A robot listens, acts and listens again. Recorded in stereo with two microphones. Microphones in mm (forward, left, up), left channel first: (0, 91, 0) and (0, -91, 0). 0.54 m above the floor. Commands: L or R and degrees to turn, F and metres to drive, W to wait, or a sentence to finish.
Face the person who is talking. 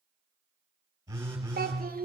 R60
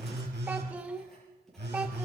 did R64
R10
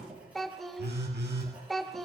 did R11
Facing the child speaking, 1 to 2 m away.